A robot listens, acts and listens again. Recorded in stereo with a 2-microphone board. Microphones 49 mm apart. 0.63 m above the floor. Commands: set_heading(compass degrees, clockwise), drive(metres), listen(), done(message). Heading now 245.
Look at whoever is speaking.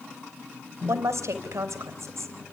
set_heading(315)
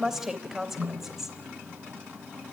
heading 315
set_heading(325)
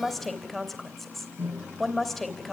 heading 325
done("Found it: a woman speaking, straight ahead.")